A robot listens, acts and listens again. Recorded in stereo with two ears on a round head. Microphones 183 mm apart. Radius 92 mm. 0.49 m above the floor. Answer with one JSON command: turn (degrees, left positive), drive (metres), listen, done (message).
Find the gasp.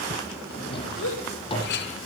{"turn": 70}
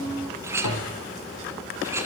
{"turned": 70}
{"listen": true}
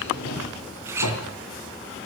{"done": "I heard a gasp, but can't make it out now. It was about straight ahead or 40° left."}